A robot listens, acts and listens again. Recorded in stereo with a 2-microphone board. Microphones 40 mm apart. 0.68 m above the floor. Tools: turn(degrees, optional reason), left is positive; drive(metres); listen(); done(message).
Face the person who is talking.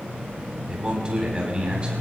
turn(degrees=-25, reason="The man speaking: about 25° right or 155° right.")
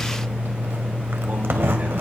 listen()
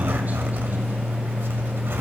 listen()
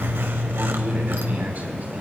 done("I heard a man speaking, but can't make it out now. It was about straight ahead or 130° right.")